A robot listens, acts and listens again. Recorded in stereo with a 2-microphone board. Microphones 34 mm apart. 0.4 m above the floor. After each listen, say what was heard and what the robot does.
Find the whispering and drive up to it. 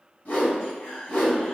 The whispering: about 60° left or 120° left. Turn 60° left.
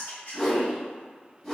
So it is at 50° left. Turn 50° left.
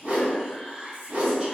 The whispering is now 15° right. Turn 15° right.
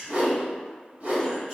Drive 1.0 m forward.
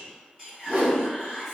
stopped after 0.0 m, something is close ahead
Something is in my way. I am facing the whispering but have not reached it.